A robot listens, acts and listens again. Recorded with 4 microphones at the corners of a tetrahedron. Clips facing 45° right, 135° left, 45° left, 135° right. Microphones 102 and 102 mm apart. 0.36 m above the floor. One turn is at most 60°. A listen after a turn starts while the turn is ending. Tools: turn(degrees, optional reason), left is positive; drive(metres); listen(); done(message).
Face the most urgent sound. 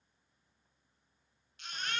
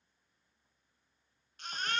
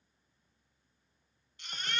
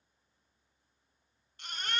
turn(degrees=60, reason="The baby crying: straight behind.")
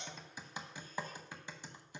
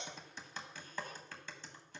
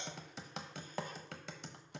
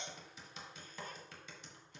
turn(degrees=60, reason="Nothing new. It was at 120° left.")
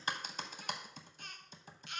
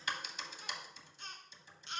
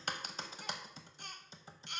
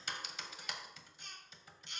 turn(degrees=60, reason="The baby crying is now 75° left.")
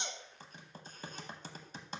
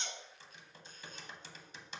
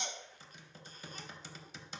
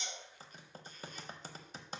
turn(degrees=15, reason="Nothing new. It was at 15° left.")
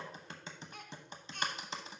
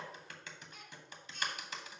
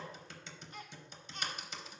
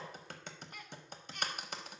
turn(degrees=-15, reason="The baby crying is now 15° right.")
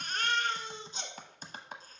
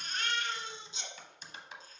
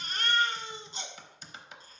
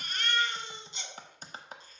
done("Found it: a baby crying, straight ahead, 1 to 2 m away.")